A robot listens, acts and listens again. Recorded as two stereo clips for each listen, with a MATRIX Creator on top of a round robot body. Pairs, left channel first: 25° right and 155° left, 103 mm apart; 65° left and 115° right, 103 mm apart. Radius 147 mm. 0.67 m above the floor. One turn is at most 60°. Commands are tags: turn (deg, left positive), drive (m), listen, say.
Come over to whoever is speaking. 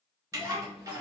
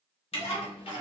<turn deg="55"/>
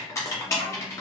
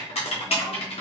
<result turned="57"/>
<listen/>
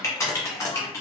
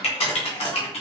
<listen/>
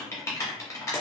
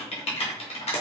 <say>Facing where the child speaking came from. I can't hear it now. I did not reach it.</say>